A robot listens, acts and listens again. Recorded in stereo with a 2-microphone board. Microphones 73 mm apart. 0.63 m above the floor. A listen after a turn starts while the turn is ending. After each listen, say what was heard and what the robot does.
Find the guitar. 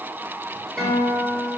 Turn 30° left.
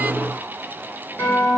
So it is at 145° left. Turn 145° left.
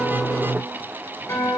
The guitar is now 45° left. Turn 45° left.
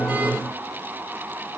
Keep listening.
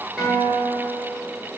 The guitar is now 15° right. Turn 15° right.
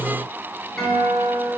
Facing the guitar, 2 to 4 m away.